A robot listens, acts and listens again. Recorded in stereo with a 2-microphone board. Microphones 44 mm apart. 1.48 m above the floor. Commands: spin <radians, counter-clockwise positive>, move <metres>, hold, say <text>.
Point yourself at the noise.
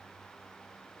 hold
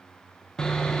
spin 0.26
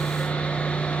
spin 2.62
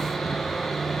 say Facing the sawing.